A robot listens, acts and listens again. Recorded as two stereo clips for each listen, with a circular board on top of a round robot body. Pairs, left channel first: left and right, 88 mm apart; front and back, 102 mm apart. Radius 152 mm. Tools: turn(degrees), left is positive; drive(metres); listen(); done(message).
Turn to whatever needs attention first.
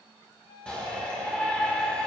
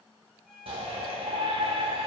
turn(degrees=165)
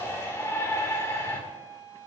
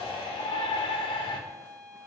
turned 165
turn(degrees=30)
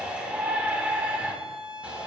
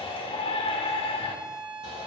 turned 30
turn(degrees=-15)
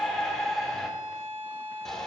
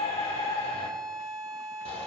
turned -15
done("Facing the shout, 2 to 4 m away.")